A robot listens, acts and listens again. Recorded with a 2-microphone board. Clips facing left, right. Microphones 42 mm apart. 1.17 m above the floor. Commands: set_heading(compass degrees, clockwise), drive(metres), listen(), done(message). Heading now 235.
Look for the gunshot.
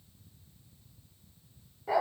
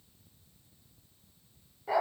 listen()
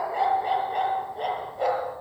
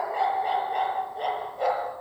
listen()
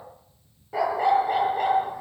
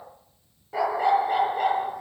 done("I can't make out a gunshot to turn to.")